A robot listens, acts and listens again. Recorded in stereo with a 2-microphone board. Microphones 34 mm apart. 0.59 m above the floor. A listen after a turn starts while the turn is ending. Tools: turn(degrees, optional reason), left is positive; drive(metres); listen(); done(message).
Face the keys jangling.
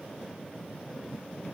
listen()
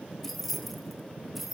turn(degrees=-30)
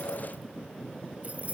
turn(degrees=-135, reason="So it is at 135° right.")
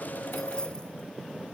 listen()
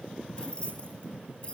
turn(degrees=30, reason="The keys jangling is now 30° left.")
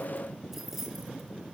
turn(degrees=-10, reason="The keys jangling is now 10° right.")
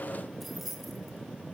done("Facing the keys jangling.")